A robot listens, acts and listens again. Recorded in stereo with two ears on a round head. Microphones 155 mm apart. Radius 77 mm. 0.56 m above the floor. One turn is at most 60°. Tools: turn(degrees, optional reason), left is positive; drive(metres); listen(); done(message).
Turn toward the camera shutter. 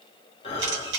turn(degrees=-60, reason="The camera shutter: about 75° right or 105° right.")
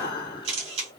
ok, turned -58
turn(degrees=-40, reason="So it is at 40° right.")
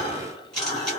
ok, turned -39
done("Facing the camera shutter, 1 to 2 m away.")